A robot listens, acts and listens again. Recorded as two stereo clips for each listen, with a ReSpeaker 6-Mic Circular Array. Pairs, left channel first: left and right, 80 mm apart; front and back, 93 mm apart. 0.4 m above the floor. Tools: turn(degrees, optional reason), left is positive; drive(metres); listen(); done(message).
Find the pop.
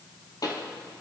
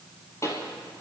turn(degrees=55, reason="The pop: 55° left.")
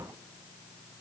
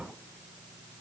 done("Facing where the pop came from. I can't hear it now.")